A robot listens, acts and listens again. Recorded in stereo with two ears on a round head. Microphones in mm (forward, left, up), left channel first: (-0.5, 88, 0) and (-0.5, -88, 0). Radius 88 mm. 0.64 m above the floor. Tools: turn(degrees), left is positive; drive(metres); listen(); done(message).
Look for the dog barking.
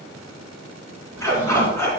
turn(degrees=30)
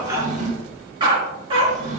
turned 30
turn(degrees=-30)
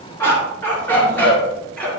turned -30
done("Facing the dog barking.")